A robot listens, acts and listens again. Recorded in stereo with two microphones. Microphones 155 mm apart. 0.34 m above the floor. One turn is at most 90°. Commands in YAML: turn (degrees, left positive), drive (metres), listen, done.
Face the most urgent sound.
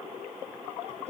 listen: true
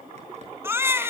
turn: -15
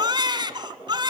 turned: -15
turn: -90
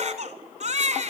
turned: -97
turn: -50
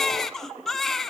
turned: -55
done: "Found it: a baby crying, straight ahead, 1 to 2 m away."